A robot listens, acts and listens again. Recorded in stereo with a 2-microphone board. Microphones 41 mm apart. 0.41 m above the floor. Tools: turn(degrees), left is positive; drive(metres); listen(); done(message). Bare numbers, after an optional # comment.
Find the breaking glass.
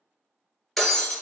turn(30)
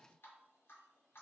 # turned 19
listen()
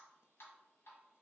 done("I heard breaking glass, but can't make it out now. It was about 15° right or 155° left.")